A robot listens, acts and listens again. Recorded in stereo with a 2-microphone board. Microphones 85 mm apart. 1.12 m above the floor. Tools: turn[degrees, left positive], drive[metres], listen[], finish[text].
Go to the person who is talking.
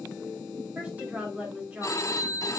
Thought: The woman speaking: about 20° right or 160° right.
Action: turn[-20]
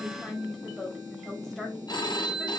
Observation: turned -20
Action: drive[1.0]
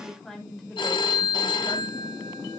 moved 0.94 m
Action: drive[1.0]
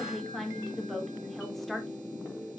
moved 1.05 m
Action: drive[1.0]
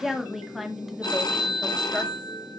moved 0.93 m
Action: drive[1.0]
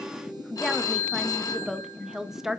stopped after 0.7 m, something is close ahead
Action: finish[Arrived at the woman speaking, straight ahead.]